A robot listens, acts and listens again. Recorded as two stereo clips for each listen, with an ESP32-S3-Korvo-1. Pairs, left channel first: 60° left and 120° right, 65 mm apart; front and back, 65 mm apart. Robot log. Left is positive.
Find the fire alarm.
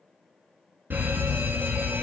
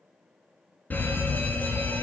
note: The fire alarm: 60° right.
cmd yaw -60
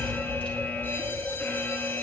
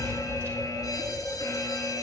end: Facing the fire alarm.